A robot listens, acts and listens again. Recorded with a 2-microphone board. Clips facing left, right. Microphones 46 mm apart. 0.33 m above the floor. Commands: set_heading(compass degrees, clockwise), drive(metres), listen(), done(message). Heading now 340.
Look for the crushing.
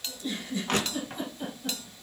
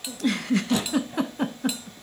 set_heading(295)
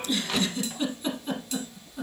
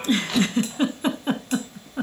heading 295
done("Facing the crushing.")